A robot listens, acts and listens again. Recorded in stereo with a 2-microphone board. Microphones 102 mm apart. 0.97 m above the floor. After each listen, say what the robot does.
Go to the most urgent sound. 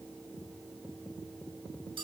Keep listening.
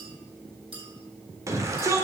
Turn 30° right.
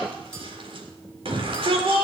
Turn 120° right.
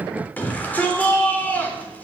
Turn 15° left.
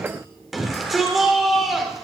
Drive 1.0 m forward.
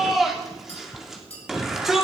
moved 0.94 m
Drive 1.0 m forward.
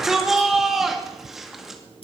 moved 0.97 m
Drive 1.0 m forward.
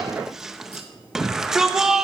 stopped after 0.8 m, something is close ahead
I am next to the shout.